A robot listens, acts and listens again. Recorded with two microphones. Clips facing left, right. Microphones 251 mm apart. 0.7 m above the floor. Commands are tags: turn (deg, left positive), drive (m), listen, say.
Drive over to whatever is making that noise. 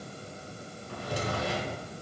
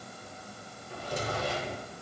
<turn deg="75"/>
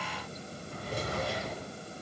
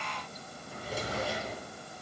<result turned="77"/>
<drive m="1.0"/>
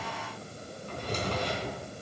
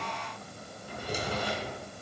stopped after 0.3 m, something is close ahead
<turn deg="-10"/>
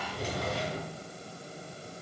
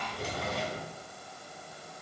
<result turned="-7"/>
<say>Something is in my way. I am facing the drawer but have not reached it.</say>